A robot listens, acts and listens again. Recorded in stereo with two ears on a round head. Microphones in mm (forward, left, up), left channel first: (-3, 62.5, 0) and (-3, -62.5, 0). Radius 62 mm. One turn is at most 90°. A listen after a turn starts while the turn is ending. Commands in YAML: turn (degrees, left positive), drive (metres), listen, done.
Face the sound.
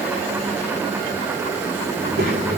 turn: -90
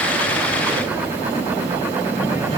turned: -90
turn: -25
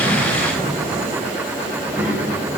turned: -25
turn: -10
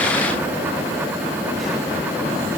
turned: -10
listen: true
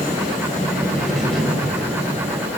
done: "Facing the child speaking."